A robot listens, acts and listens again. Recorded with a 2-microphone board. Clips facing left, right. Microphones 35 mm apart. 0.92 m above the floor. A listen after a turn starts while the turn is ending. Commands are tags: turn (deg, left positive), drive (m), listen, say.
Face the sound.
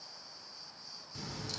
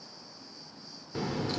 <turn deg="-35"/>
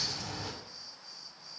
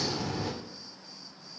<say>Found it: a crack, straight ahead.</say>